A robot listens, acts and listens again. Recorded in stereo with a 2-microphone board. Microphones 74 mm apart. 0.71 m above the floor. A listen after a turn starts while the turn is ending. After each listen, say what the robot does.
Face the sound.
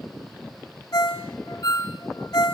Turn 55° left.
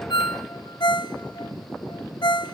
Turn 70° left.
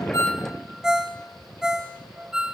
Turn 10° right.
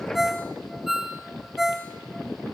Found it: a ringtone, straight ahead, 1 to 2 m away.